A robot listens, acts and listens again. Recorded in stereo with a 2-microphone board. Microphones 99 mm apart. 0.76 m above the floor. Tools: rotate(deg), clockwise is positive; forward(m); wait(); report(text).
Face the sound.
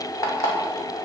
rotate(-35)
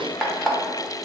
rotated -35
report("Facing the alarm clock.")